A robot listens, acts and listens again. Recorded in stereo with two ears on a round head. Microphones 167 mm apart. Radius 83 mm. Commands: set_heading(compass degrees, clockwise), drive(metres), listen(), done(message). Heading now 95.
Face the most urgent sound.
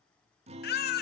set_heading(40)
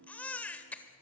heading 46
set_heading(36)
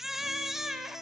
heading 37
done("Found it: a baby crying, straight ahead.")